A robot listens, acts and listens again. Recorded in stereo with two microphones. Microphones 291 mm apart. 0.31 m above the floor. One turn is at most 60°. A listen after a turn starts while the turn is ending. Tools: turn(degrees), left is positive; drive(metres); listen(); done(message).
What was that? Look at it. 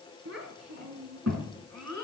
turn(degrees=-60)
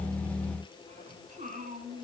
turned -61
turn(degrees=-30)
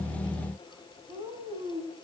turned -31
turn(degrees=-20)
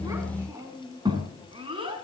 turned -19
turn(degrees=-15)
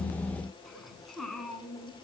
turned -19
done("Found it: a child speaking, straight ahead.")